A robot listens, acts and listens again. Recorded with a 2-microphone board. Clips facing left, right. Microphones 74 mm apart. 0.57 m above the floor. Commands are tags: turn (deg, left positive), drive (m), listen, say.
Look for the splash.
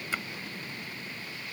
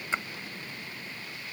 <turn deg="-25"/>
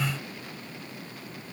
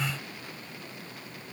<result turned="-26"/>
<listen/>
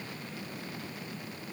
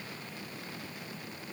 <say>I heard a splash, but can't make it out now. It was about straight ahead or 130° right.</say>